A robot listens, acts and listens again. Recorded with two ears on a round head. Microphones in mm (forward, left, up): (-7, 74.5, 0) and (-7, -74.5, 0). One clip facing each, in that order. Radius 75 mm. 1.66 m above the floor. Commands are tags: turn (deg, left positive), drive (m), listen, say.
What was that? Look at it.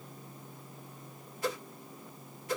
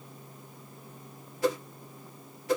<turn deg="-60"/>
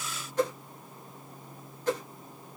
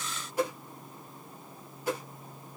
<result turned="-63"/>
<turn deg="-10"/>
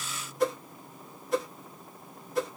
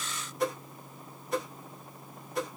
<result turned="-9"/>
<say>Facing the whoosh.</say>